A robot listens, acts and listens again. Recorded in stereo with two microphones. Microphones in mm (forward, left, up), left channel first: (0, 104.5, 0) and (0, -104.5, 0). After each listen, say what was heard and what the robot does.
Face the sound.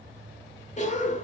The cough: about 35° left or 145° left. Turn 35° left.
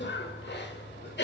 So it is at 105° left. Turn 105° left.
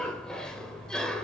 Found it: a cough, straight ahead, 1 to 2 m away.